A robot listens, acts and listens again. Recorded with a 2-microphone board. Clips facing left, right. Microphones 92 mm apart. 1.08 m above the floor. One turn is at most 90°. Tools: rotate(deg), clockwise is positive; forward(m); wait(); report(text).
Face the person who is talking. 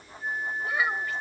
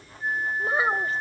rotate(35)
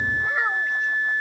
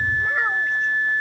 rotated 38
report("Facing the child speaking.")